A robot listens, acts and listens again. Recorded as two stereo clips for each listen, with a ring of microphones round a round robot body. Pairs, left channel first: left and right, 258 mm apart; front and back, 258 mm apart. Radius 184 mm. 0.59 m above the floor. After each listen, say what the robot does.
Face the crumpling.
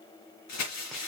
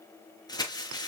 Turn 75° left.
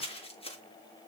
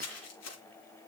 Turn 20° left.
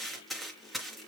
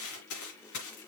Found it: crumpling, straight ahead.